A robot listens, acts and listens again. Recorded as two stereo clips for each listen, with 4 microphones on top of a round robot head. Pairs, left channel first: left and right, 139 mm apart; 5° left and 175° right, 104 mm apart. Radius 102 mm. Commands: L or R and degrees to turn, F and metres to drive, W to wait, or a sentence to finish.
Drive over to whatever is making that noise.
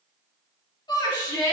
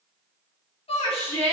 L30
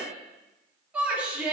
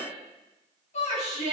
R10
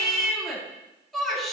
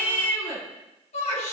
F1.0
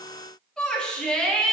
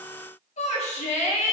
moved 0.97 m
F1.0
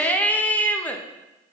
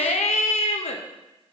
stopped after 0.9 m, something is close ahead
L10
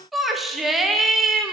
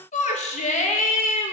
I am next to the shout.